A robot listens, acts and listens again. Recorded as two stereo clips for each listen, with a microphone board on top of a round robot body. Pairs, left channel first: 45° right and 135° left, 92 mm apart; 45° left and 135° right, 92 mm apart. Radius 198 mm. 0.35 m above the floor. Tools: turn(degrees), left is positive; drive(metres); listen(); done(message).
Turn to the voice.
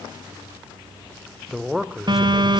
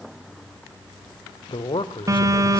turn(degrees=50)
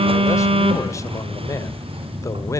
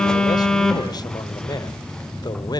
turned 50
listen()
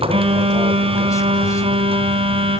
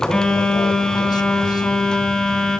listen()
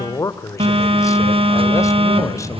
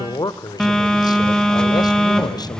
done("Found it: a man speaking, straight ahead, 2 to 4 m away.")